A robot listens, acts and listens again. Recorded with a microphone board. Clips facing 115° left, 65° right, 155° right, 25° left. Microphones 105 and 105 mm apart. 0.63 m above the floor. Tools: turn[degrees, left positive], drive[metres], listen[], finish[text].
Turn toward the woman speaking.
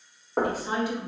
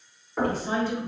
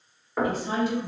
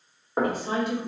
Thought: The woman speaking: 40° left.
Action: turn[40]
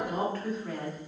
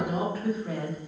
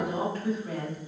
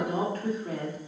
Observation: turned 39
Thought: The woman speaking is now 20° left.
Action: turn[20]
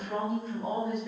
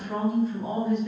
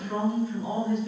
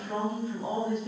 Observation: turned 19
Thought: The woman speaking is now 30° left.
Action: turn[30]
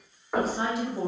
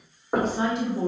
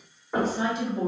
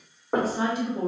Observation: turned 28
Thought: The woman speaking is now 35° left.
Action: turn[35]
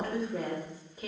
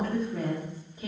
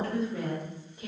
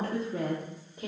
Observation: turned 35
Thought: The woman speaking is now 20° left.
Action: turn[20]
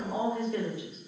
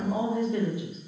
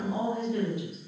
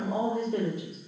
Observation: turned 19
Action: finish[Found it: a woman speaking, straight ahead.]